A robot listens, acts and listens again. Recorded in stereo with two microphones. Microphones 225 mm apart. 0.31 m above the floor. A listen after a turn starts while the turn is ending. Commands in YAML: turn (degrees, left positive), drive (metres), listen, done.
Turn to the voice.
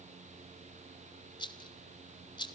listen: true
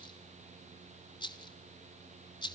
listen: true
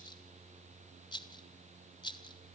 done: "I can't make out anyone speaking, only a rattle."